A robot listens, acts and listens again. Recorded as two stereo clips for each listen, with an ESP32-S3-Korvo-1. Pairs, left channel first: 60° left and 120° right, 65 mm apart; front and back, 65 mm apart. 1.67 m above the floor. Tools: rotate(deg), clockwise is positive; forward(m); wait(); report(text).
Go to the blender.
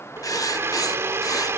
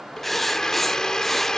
rotate(80)
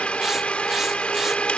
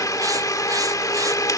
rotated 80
rotate(10)
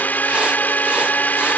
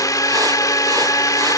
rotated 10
forward(1.0)
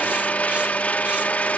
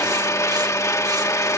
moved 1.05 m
forward(1.0)
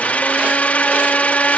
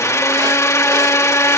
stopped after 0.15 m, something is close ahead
report("I am next to the blender.")